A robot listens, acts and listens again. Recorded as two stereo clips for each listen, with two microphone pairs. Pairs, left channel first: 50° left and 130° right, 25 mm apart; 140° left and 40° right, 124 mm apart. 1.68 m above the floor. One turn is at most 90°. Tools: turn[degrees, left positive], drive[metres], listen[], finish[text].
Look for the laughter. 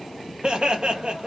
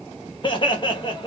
Thought: The laughter: 175° right.
Action: turn[-90]
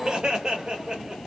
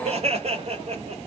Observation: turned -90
Thought: The laughter is now 80° right.
Action: turn[-80]
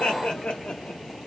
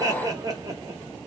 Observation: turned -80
Thought: The laughter is now 15° left.
Action: turn[15]
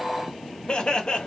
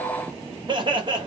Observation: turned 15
Action: finish[Facing the laughter.]